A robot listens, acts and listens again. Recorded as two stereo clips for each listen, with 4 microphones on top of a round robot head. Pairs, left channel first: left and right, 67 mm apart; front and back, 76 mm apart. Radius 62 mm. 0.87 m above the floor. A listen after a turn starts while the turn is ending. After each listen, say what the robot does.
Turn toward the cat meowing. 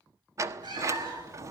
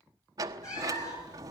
Turn 60° right.
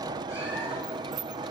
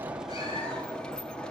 Keep listening.
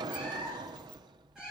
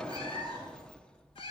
Found it: a cat meowing, straight ahead.